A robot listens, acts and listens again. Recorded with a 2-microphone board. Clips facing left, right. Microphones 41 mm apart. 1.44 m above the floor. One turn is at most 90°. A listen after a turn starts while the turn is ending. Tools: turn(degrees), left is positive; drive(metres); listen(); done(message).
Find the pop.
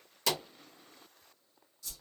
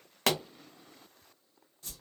turn(degrees=-60)
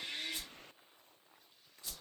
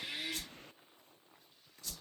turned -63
listen()
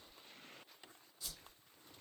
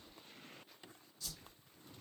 done("I heard a pop, but can't make it out now. It was about 5° left or 55° right.")